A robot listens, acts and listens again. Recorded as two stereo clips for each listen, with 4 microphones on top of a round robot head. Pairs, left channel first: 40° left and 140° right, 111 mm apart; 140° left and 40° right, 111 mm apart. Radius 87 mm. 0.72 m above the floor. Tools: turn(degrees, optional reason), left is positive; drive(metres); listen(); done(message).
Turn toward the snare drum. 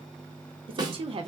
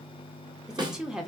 turn(degrees=-90, reason="The snare drum: 90° right.")
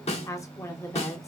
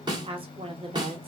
turn(degrees=15, reason="The snare drum is now 15° left.")
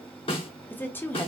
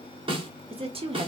done("Facing the snare drum, 1 to 2 m away.")